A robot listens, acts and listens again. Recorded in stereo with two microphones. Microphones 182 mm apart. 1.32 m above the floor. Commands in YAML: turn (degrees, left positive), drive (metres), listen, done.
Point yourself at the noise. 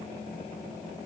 listen: true
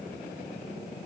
listen: true
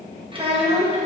turn: -40
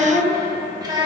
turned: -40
turn: -25
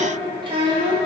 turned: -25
turn: -30
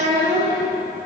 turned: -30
turn: -25
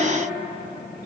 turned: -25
listen: true
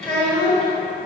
done: "Found it: a child speaking, straight ahead."